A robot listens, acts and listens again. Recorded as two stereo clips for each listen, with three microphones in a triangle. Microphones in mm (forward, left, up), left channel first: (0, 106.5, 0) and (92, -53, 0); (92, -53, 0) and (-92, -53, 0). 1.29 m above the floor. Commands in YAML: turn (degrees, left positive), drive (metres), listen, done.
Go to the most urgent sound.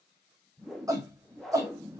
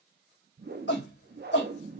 turn: 10
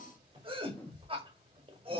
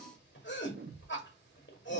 drive: 1.0
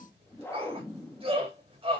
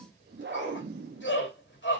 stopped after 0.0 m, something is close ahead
done: "Blocked. The shout is further on, straight ahead."